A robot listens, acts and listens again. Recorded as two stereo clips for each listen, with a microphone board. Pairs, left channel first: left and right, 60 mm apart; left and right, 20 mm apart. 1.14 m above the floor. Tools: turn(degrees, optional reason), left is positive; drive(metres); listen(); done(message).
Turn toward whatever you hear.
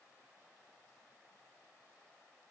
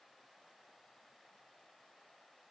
listen()
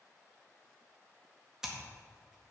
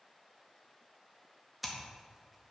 turn(degrees=-30)
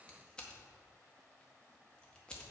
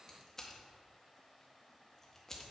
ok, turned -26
turn(degrees=15, reason="So it is at 15° left.")
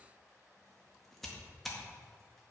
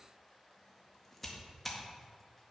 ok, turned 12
done("Facing the scissors, 1 to 2 m away.")